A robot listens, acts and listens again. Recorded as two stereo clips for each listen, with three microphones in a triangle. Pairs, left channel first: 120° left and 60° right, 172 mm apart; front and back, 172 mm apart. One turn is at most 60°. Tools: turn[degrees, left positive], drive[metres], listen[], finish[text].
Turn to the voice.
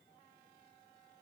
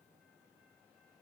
Action: listen[]
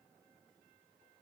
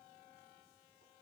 Action: listen[]
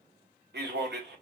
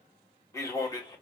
Thought: The man speaking: 65° right.
Action: turn[-60]
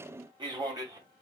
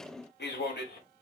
Action: finish[Facing the man speaking.]